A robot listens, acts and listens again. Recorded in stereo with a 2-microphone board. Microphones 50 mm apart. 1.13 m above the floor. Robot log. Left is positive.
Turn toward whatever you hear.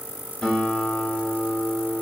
cmd yaw +30
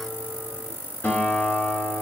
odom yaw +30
note: So it is at 135° left.
cmd yaw +135
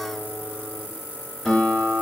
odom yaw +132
end: Facing the guitar, 1 to 2 m away.